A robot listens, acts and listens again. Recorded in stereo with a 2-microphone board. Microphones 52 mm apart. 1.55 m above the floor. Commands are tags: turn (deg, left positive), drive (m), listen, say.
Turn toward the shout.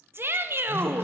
<turn deg="-45"/>
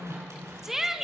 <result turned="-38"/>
<turn deg="-10"/>
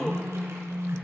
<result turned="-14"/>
<listen/>
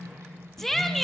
<say>Found it: a shout, straight ahead.</say>